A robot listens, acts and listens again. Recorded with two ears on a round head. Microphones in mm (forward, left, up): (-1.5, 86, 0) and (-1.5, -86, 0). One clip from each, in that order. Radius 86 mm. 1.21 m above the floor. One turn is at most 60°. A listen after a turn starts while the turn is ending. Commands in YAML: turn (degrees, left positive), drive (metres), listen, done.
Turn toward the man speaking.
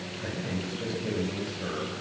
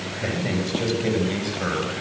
turn: -45
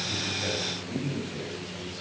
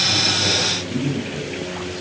done: "Facing the man speaking, over 4 m away."